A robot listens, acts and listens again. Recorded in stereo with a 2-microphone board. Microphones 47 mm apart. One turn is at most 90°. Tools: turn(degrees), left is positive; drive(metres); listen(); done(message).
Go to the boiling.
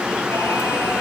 listen()
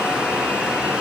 listen()
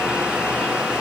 done("I can't make out boiling.")